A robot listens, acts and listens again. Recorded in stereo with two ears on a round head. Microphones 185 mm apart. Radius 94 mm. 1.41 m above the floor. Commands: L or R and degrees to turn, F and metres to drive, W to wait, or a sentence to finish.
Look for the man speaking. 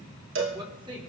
R25
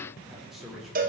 Found it: a man speaking, straight ahead, over 4 m away.